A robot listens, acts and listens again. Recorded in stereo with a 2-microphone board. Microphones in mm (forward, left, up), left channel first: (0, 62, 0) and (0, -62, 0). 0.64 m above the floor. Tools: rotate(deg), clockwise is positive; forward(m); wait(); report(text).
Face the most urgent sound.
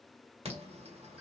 rotate(55)
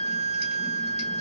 wait()
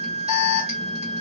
rotate(65)
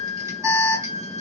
rotate(30)
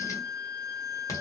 rotate(-30)
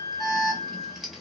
report("Found it: an alarm, straight ahead.")